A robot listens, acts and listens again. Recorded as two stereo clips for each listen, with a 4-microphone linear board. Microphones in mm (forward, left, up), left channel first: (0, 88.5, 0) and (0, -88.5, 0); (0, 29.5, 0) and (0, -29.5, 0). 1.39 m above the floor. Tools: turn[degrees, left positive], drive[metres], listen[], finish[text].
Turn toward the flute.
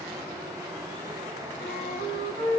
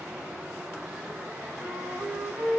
Thought: The flute: about 70° right or 110° right.
Action: turn[-70]
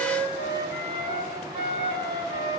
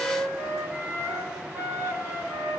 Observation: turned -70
Thought: So it is at 35° right.
Action: turn[-35]
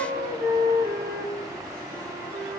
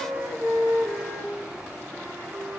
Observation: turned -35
Thought: The flute is now 10° right.
Action: turn[-10]
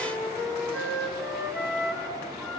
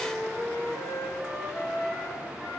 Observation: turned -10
Action: finish[Found it: a flute, straight ahead, over 4 m away.]